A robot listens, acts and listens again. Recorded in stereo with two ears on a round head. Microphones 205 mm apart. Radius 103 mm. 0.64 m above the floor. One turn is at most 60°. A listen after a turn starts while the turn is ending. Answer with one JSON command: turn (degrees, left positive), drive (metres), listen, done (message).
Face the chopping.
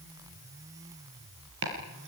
{"turn": -60}
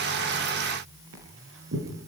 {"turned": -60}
{"turn": -60}
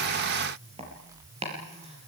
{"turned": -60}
{"turn": -25}
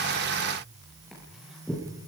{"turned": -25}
{"done": "Facing the chopping."}